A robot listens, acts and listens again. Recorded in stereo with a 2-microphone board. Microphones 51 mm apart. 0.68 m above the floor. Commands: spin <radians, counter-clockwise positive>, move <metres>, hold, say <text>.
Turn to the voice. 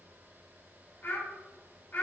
spin 0.79
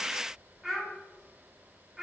say Found it: a child speaking, straight ahead.